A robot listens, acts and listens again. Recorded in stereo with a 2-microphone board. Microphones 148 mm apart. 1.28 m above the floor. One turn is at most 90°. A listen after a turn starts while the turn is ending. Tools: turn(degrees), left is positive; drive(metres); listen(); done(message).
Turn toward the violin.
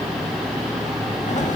listen()
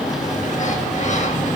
listen()
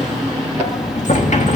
done("I can't make out a violin, only a sliding door.")